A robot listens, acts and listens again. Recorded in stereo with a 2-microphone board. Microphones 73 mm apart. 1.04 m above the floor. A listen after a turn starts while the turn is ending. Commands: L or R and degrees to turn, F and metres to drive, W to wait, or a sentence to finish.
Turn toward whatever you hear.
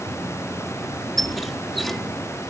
L30
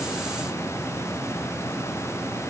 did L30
W
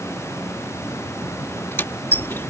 L150
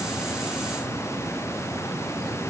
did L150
W
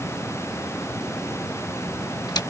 L60
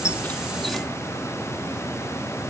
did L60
W
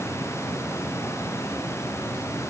W
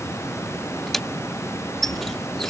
Found it: a squeak, straight ahead.